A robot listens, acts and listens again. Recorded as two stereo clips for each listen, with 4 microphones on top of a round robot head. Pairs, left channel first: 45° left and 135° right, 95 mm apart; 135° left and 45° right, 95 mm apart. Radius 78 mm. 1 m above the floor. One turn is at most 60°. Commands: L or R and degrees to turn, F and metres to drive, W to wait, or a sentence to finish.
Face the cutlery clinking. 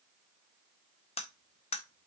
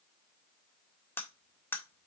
L60
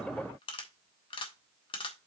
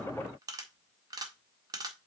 Found it: cutlery clinking, straight ahead.